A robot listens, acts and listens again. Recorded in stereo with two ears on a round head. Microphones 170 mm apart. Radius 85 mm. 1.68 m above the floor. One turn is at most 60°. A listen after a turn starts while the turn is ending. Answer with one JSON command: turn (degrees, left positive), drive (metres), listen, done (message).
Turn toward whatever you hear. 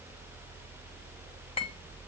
{"turn": 30}
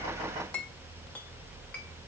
{"turn": 10}
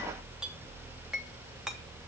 {"done": "Found it: a clink, straight ahead, 1 to 2 m away."}